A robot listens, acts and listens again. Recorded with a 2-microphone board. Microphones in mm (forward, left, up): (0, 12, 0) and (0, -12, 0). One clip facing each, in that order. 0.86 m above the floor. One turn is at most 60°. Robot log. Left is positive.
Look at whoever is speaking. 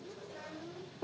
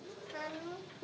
note: The child speaking: about 75° right or 105° right.
cmd yaw -60
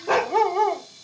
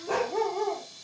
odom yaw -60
cmd idle
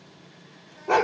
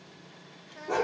note: So it is at 30° right.
cmd yaw -30
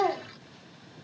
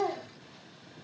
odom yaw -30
cmd idle
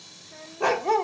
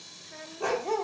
note: The child speaking is now 15° right.
cmd yaw -15
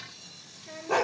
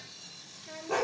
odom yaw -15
end: Facing the child speaking, 1 to 2 m away.